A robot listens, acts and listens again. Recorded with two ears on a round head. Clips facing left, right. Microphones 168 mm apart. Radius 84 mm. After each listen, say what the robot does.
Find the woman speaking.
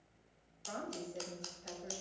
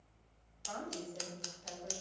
Turn 25° left.
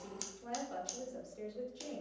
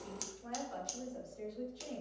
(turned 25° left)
Turn 30° left.
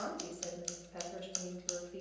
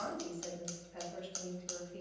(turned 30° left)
Turn 135° left.
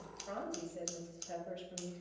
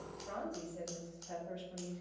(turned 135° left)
Turn 20° left.
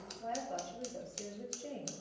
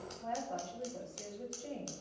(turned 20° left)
Found it: a woman speaking, straight ahead.